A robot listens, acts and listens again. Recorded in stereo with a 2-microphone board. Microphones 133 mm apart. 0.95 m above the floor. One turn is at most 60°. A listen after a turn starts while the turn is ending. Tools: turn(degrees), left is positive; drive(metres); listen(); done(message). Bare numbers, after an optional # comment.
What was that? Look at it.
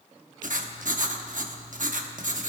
turn(-60)
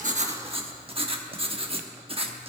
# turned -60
# So it is at 45° right.
turn(-45)
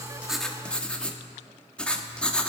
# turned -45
done("Found it: writing, straight ahead, 1 to 2 m away.")